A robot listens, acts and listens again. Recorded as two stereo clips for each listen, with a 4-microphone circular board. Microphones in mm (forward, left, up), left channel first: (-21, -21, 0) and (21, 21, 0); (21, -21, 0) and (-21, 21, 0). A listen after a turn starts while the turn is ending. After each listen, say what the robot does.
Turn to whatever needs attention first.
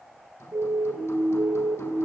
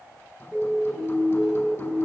Turn 20° left.
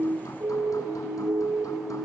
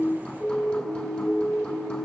Found it: a siren, straight ahead.